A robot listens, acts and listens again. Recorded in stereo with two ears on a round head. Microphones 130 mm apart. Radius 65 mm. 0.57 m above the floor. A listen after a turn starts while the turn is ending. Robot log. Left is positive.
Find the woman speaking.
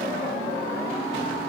cmd idle
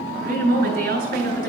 note: The woman speaking: about 70° right or 110° right.
cmd yaw -70
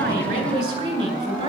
note: So it is at 40° right.
cmd yaw -40
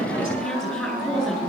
end: Found it: a woman speaking, straight ahead.